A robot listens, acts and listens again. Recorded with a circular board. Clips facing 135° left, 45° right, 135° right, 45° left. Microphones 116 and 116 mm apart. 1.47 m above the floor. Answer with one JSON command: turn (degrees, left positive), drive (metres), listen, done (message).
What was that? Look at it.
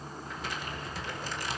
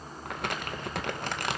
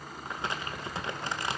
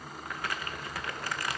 {"turn": -70}
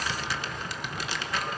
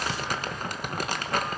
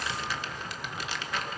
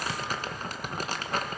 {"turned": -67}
{"done": "Found it: crumpling, straight ahead."}